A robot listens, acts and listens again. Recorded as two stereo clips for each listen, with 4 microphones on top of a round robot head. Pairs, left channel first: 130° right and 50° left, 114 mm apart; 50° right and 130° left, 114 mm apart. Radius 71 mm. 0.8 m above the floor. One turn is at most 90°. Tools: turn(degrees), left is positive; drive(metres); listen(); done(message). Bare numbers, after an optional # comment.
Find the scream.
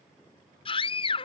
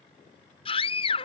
# The scream: 90° right.
turn(-90)
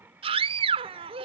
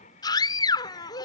# The scream is now 10° left.
turn(10)
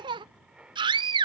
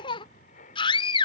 done("Found it: a scream, straight ahead.")